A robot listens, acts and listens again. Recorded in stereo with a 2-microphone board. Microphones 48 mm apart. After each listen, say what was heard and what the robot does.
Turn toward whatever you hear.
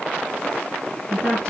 The woman speaking: about 20° left or 160° left. Turn 20° left.
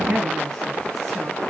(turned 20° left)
Found it: a woman speaking, straight ahead.